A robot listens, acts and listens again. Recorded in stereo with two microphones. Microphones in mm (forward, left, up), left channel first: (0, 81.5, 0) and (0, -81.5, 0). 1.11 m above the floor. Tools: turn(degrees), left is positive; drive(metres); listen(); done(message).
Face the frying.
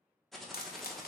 turn(degrees=70)
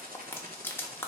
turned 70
turn(degrees=15)
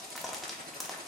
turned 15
done("Found it: frying, straight ahead.")